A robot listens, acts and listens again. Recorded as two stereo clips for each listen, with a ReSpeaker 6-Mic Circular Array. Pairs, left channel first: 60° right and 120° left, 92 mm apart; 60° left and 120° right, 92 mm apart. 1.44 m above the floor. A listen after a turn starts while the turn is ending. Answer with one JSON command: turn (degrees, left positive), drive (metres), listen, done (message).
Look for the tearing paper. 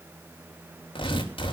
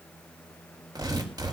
{"turn": -75}
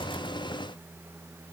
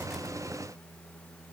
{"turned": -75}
{"listen": true}
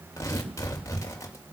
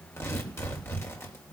{"done": "Found it: tearing paper, straight ahead."}